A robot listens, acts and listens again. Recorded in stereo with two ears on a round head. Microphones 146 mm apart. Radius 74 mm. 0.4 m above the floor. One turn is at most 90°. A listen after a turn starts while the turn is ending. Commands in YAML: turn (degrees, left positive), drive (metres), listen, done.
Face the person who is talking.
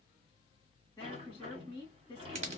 turn: 15
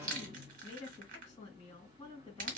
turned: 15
turn: 90
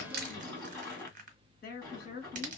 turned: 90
turn: 90
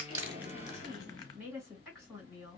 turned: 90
done: "Facing the woman speaking."